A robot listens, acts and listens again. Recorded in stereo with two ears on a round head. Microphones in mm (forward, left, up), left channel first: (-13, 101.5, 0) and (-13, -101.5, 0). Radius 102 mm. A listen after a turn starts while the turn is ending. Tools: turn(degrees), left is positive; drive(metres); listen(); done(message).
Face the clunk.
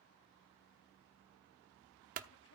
turn(degrees=-35)
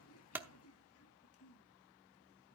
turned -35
listen()
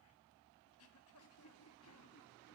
done("I heard a clunk, but can't make it out now. It was about straight ahead or 110° right.")